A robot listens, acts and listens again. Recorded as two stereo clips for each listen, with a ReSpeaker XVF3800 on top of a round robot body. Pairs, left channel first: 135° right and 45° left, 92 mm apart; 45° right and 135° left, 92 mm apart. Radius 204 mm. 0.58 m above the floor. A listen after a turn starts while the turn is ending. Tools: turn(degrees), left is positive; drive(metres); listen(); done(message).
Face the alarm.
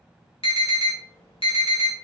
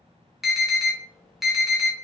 turn(degrees=-135)
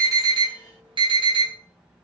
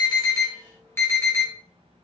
turn(degrees=20)
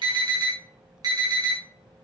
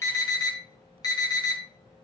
done("Facing the alarm.")